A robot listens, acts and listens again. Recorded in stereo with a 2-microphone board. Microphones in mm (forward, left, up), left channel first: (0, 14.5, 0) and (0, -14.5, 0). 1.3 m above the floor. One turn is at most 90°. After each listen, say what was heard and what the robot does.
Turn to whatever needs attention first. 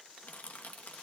Keep listening.
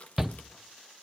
Turn 30° right.
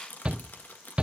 So it is at 135° right. Turn 90° right.
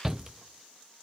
The shout is now 20° right. Turn 20° right.
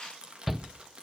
The shout is now 10° right. Turn 10° right.
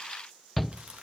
Facing the shout, under 1 m away.